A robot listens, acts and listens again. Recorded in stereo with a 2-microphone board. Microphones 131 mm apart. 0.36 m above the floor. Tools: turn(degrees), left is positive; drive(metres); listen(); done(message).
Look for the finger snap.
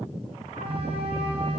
listen()
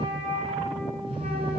listen()
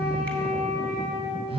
done("I can't make out a finger snap, only a phone buzzing and a flute.")